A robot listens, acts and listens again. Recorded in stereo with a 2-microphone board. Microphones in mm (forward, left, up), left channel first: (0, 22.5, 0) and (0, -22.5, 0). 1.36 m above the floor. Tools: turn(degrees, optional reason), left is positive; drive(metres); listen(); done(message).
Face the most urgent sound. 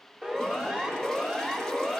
turn(degrees=-25, reason="The siren: about 25° right or 155° right.")
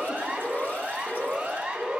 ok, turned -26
turn(degrees=-130, reason="So it is at 130° right.")
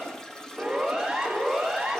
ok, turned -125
turn(degrees=-10, reason="The siren is now 10° right.")
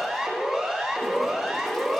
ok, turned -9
done("Facing the siren.")